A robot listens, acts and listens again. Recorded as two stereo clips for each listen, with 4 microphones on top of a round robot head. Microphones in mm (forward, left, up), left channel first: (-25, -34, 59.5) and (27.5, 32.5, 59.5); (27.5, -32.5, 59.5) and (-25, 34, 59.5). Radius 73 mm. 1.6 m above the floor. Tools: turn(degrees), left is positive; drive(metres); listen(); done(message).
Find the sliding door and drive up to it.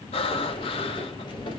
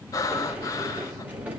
turn(degrees=-160)
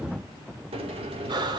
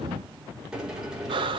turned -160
turn(degrees=45)
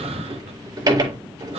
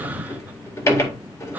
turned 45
drive(metres=1.0)
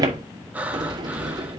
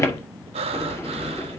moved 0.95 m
turn(degrees=10)
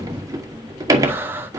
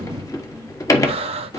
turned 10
drive(metres=1.0)
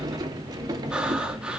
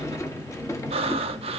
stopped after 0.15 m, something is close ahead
done("I am next to the sliding door.")